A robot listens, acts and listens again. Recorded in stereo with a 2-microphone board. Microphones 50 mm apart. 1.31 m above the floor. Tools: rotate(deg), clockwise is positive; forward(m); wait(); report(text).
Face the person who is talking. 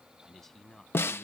rotate(-30)
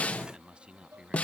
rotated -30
rotate(20)
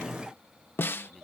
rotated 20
wait()
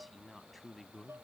report("Facing the man speaking.")